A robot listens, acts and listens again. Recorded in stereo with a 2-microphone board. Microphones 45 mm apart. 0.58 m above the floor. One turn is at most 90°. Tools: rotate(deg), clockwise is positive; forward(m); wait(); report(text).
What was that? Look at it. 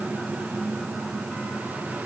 wait()
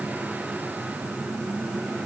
wait()
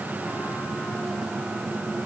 report("I can't make out anything to turn to.")